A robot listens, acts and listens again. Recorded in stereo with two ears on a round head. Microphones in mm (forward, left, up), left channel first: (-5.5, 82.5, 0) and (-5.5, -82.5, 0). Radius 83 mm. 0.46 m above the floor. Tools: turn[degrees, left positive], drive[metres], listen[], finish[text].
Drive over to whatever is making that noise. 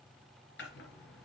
Thought: The chopping: about 65° left or 115° left.
Action: turn[65]
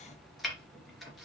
Action: drive[1.0]
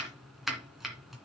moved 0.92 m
Action: drive[1.0]
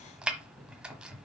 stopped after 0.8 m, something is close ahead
Action: finish[Arrived at the chopping, straight ahead.]